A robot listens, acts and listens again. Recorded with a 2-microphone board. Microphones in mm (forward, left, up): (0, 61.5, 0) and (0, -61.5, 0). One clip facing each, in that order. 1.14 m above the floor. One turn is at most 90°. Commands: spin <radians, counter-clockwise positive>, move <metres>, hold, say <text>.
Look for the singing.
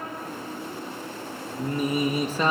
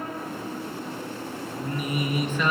spin 0.61
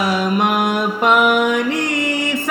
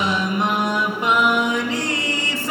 spin 1.57
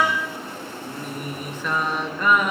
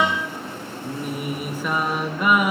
spin -0.17
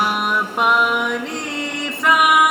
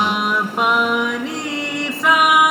say Found it: singing, straight ahead.